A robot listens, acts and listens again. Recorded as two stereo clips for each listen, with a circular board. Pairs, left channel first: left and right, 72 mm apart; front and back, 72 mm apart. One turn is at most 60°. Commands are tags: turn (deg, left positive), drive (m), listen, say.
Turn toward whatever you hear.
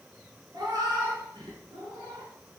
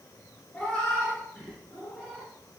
<turn deg="-60"/>
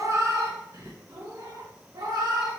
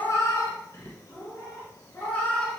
<turn deg="-60"/>
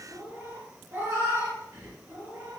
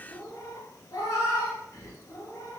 <turn deg="-35"/>
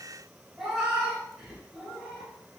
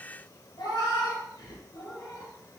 <say>Found it: a cat meowing, straight ahead.</say>